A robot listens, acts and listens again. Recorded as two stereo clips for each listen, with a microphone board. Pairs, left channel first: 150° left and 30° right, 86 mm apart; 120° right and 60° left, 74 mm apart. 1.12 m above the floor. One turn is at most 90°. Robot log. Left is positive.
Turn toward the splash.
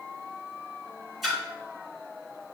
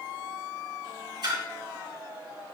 note: The splash: 55° left.
cmd yaw +55
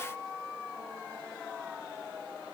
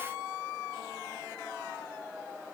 end: I heard a splash from this way, but can't make it out now.